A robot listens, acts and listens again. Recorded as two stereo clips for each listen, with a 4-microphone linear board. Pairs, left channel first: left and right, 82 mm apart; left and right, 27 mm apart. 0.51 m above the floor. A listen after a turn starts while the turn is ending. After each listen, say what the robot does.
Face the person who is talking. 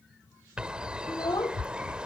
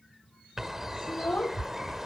Turn 60° left.
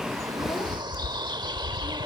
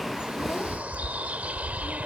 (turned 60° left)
Keep listening.
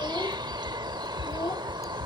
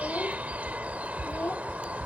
Turn 60° left.
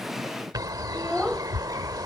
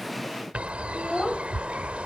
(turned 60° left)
Facing the child speaking.